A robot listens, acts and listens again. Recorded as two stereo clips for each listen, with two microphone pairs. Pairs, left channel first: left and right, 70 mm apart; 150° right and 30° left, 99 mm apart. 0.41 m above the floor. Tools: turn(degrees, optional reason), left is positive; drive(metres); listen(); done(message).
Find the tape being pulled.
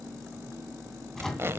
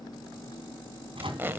turn(degrees=-35, reason="The tape being pulled: 35° right.")
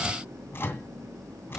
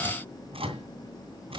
listen()
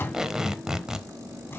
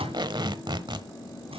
done("Found it: tape being pulled, straight ahead, 1 to 2 m away.")